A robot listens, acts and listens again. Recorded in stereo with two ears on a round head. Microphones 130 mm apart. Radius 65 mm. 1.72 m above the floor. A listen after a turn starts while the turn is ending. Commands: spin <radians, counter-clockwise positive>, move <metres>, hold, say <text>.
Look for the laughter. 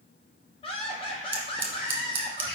spin 0.61
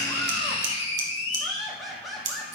say Found it: laughter, straight ahead.